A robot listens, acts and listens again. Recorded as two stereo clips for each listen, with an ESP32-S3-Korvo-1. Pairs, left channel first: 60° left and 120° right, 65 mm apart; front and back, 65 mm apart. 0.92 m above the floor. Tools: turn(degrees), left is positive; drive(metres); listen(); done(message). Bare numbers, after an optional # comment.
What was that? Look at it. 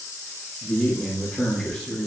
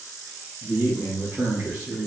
# The man speaking: 150° left.
turn(150)
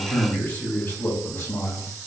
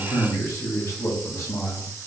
# The man speaking is now 35° left.
turn(35)
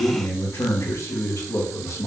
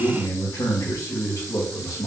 # The man speaking is now 30° left.
turn(30)
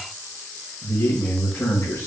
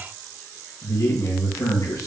# The man speaking is now 10° left.
turn(10)
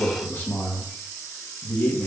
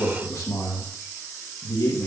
done("Facing the man speaking, 1 to 2 m away.")